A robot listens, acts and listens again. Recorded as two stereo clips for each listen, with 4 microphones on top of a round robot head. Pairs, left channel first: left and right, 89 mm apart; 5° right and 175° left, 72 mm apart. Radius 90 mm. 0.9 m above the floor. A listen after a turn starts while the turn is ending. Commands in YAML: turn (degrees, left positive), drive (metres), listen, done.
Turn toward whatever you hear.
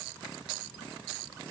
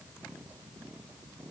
listen: true
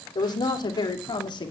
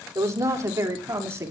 turn: 125
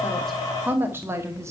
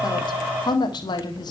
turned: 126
turn: -25
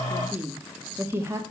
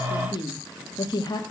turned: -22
turn: -30
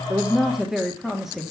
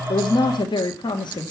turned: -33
done: "Facing the woman speaking, 1 to 2 m away."